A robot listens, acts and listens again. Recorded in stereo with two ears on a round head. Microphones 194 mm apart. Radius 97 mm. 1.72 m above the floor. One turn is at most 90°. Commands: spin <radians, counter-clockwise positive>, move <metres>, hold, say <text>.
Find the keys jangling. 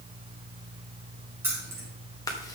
spin -0.52
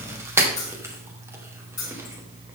spin 0.35
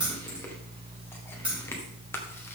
say Facing the keys jangling.